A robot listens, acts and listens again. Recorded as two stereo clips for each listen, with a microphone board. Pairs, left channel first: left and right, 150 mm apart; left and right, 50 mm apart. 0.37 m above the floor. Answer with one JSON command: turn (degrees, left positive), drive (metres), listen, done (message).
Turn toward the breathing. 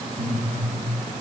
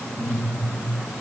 {"turn": -50}
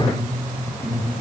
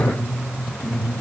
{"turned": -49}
{"done": "Found it: breathing, straight ahead."}